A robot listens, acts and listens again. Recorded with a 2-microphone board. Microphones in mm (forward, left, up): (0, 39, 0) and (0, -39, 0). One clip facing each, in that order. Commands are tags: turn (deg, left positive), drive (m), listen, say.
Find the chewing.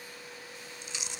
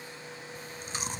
<turn deg="-45"/>
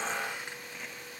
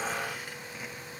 <listen/>
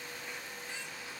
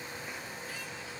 <listen/>
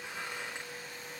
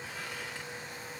<say>I heard chewing, but can't make it out now. It was about straight ahead or 90° right.</say>